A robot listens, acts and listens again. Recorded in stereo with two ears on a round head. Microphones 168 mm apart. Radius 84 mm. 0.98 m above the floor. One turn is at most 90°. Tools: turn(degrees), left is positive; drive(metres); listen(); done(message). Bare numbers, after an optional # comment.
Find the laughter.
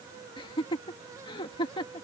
# The laughter: about 25° left or 155° left.
turn(25)
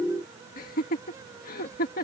# So it is at 125° left.
turn(90)
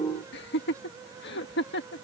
# The laughter is now 70° left.
turn(70)
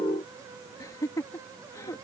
# The laughter is now 20° left.
turn(20)
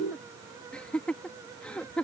done("Facing the laughter.")